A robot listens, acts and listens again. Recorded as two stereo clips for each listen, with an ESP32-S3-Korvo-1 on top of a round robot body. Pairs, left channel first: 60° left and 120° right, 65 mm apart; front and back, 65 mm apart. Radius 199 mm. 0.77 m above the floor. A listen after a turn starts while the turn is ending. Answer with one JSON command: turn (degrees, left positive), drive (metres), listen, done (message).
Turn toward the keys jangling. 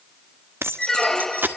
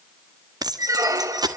{"turn": 180}
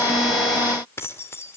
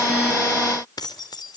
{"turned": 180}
{"done": "Found it: keys jangling, straight ahead."}